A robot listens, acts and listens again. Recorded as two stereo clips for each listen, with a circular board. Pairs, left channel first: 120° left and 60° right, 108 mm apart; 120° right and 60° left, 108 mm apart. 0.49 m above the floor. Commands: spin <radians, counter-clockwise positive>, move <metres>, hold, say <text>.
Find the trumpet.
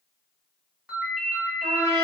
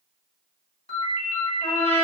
spin -1.75
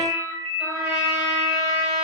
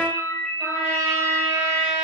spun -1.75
say Found it: a trumpet, straight ahead, 1 to 2 m away.